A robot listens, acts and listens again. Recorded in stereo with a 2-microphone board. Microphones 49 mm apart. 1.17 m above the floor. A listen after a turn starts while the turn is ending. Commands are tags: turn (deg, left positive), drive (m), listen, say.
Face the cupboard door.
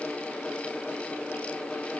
<listen/>
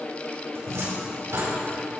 <turn deg="-90"/>
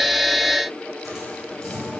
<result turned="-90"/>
<say>Facing the cupboard door, over 4 m away.</say>